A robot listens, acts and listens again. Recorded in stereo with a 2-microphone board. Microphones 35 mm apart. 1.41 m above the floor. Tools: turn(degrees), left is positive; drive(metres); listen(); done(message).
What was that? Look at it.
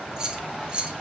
turn(degrees=-30)
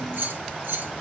turn(degrees=-100)
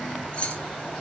turn(degrees=40)
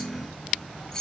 turn(degrees=20)
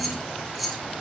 done("Found it: keys jangling, straight ahead.")